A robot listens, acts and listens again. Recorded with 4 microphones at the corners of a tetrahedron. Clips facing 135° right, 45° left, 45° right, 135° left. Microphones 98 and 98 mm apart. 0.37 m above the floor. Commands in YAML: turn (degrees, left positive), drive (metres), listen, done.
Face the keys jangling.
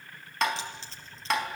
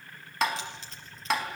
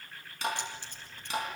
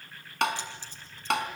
turn: -75
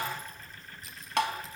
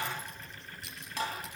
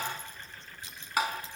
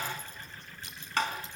turn: 30
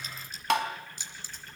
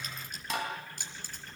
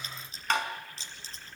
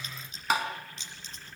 turn: 10
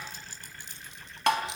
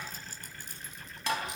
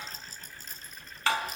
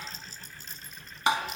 done: "Facing the keys jangling, over 4 m away."